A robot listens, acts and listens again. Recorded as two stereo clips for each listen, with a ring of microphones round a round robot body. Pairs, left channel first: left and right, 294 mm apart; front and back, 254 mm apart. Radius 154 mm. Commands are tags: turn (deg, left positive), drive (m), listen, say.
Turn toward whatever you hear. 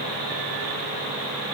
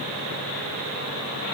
<listen/>
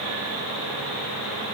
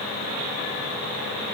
<listen/>
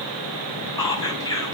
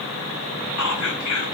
<turn deg="10"/>
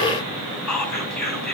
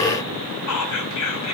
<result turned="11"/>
<say>Facing the whispering, over 4 m away.</say>